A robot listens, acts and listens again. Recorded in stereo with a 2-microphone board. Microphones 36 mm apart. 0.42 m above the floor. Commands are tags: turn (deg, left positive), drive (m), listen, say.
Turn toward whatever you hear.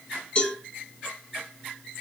<turn deg="30"/>
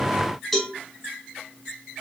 <say>Found it: a cowbell, straight ahead.</say>